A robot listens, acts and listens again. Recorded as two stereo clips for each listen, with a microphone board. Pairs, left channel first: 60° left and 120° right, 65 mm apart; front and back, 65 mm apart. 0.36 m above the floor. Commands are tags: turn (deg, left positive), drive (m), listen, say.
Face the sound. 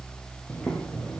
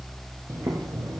<turn deg="130"/>
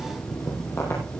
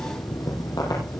<turn deg="10"/>
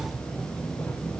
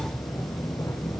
<say>Facing the boiling, over 4 m away.</say>